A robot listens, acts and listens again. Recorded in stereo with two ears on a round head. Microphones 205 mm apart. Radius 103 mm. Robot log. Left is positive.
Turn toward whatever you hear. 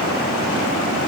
cmd idle
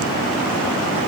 cmd idle
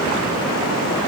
end: I can't make out anything to turn to.